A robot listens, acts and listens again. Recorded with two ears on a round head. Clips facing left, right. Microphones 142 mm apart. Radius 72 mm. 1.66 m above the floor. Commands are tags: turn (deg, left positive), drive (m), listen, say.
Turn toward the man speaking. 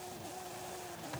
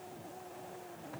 <listen/>
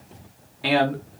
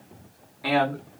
<turn deg="30"/>
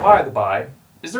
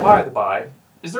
<say>Found it: a man speaking, straight ahead, 1 to 2 m away.</say>